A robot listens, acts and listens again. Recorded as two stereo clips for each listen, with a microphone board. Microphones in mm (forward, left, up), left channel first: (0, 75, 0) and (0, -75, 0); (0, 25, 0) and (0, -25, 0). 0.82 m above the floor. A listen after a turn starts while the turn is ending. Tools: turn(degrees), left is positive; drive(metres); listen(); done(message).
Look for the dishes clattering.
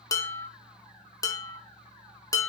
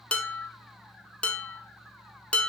turn(degrees=25)
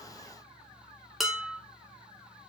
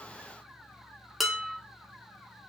done("Facing the dishes clattering, under 1 m away.")